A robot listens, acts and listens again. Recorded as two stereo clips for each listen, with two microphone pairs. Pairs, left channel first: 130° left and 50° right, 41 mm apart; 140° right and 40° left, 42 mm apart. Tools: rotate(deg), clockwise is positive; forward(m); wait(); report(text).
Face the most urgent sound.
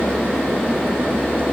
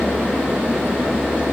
wait()
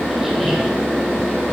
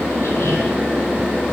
wait()
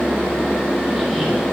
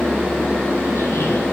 report("I can't make out anything urgent.")